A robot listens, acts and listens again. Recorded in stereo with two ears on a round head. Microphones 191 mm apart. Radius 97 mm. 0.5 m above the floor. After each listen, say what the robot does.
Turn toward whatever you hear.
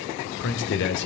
Turn 60° left.
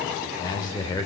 Turn 20° left.
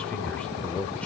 Found it: a man speaking, straight ahead.